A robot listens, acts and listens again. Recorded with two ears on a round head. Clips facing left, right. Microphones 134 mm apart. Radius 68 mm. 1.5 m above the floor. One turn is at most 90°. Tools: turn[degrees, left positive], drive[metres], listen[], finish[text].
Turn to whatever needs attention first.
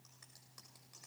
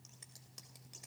Action: listen[]
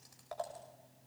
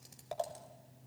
Action: listen[]
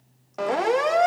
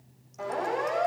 Action: turn[90]
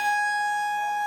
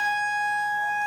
Action: finish[Found it: a siren, straight ahead, 2 to 4 m away.]